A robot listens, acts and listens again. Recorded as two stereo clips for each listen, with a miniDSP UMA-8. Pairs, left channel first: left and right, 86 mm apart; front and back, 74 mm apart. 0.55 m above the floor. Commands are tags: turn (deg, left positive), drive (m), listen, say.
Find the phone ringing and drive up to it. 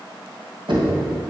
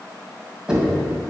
<listen/>
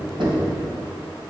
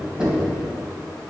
<listen/>
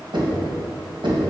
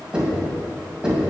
<say>I can't make out a phone ringing, only knocking.</say>